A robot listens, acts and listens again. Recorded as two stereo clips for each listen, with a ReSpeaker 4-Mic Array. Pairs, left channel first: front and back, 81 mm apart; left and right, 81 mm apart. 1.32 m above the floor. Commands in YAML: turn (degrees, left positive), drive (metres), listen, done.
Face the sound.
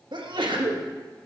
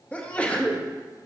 turn: 160
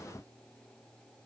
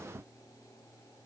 done: "I heard a sneeze from this way, but can't make it out now."